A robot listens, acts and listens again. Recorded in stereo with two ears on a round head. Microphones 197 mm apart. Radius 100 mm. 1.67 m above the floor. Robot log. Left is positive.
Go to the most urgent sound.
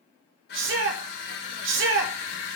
note: The shout: about 60° right or 120° right.
cmd yaw -60
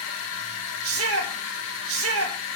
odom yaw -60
note: So it is at 65° right.
cmd yaw -65
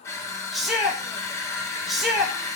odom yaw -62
cmd fwd 1.0
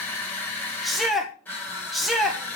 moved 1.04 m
cmd fwd 1.0
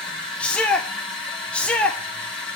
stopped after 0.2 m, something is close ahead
end: I am next to the shout.